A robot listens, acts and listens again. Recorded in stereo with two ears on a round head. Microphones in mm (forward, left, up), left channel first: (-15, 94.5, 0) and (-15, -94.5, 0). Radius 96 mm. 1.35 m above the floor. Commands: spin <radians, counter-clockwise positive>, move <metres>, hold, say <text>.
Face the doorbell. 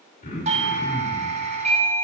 spin -0.52
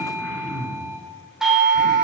say Facing the doorbell.